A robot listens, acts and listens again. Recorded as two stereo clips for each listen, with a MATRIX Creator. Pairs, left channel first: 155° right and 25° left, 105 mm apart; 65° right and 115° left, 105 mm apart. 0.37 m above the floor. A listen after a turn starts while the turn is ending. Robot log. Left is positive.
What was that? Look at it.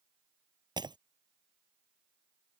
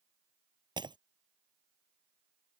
note: The breaking glass: 70° left.
cmd yaw +70
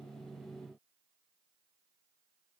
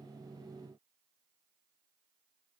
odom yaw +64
end: Facing where the breaking glass came from. I can't hear it now.